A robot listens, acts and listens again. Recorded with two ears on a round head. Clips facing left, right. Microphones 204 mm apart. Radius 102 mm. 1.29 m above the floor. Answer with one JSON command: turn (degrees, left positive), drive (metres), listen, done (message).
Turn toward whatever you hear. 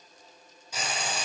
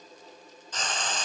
{"turn": 30}
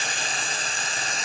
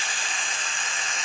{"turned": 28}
{"turn": 140}
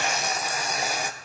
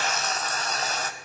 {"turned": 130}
{"turn": 10}
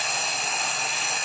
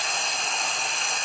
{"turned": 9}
{"done": "Facing the frying."}